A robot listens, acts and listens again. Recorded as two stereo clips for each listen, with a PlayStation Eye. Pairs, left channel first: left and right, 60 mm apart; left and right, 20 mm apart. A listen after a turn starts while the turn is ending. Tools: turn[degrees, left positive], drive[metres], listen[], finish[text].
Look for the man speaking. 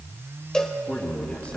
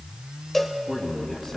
Thought: The man speaking: about 20° left or 160° left.
Action: turn[20]
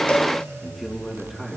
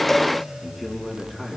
Action: finish[Facing the man speaking, 2 to 4 m away.]